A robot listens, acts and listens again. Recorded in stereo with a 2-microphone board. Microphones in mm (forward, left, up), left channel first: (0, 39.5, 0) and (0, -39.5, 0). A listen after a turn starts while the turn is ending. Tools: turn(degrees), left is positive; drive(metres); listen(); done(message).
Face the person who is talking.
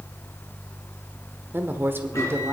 turn(degrees=-30)
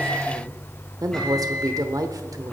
turn(degrees=-115)
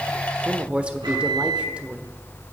turn(degrees=-15)
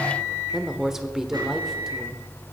done("Facing the woman speaking.")